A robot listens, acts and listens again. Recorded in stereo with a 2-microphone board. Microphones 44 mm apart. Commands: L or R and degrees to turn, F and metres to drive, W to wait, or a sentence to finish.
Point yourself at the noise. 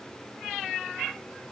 W
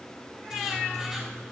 R30
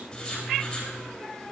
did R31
L25
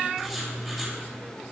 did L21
Facing the writing.